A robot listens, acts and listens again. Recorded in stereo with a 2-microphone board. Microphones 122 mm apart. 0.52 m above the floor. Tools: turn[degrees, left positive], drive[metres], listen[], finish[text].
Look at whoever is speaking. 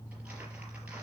Action: listen[]
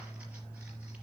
Action: listen[]
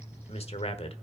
Thought: The man speaking: about 55° left or 125° left.
Action: turn[55]
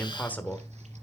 Thought: So it is at 15° left.
Action: turn[15]
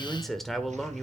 Action: finish[Facing the man speaking.]